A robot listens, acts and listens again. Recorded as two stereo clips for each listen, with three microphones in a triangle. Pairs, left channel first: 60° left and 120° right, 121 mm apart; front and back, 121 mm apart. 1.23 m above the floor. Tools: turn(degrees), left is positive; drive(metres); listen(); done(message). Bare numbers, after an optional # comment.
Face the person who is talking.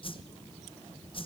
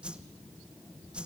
listen()
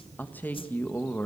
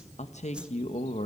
# The man speaking: 15° right.
turn(-15)
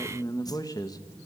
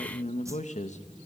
done("Found it: a man speaking, straight ahead.")